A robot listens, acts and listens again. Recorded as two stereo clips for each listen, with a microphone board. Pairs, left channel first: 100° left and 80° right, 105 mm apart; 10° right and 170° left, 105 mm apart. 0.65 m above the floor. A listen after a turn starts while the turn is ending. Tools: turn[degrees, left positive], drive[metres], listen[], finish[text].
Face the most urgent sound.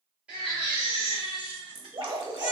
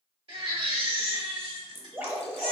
Thought: The baby crying: 160° right.
Action: turn[-160]
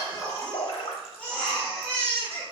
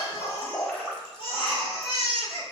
Thought: The baby crying is now 25° left.
Action: turn[25]
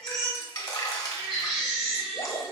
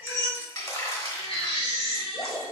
Action: finish[Found it: a baby crying, straight ahead.]